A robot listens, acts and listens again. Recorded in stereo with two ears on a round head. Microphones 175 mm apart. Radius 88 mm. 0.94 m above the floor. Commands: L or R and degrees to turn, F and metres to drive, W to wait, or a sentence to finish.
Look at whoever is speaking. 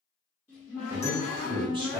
R25
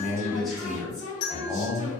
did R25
Facing the man speaking, under 1 m away.